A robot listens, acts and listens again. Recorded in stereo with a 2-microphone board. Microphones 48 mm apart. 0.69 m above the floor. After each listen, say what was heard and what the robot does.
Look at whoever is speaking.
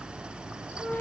Keep listening.
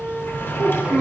The child speaking: about 15° right or 165° right. Turn 15° right.
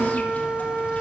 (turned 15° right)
Keep listening.
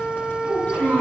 So it is at 150° right. Turn 150° right.
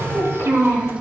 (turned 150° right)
The child speaking is now 55° right. Turn 55° right.
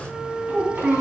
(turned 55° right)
The child speaking is now 25° right. Turn 25° right.
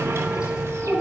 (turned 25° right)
The child speaking is now 15° right. Turn 15° right.
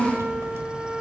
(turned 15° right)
Found it: a child speaking, straight ahead.